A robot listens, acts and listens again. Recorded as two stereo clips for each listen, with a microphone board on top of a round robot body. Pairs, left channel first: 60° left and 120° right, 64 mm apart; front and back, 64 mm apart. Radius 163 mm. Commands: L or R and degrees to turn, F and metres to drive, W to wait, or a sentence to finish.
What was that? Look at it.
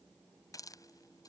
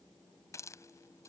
L40
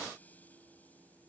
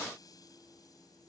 W
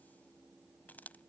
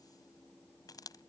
Found it: a hiss, straight ahead.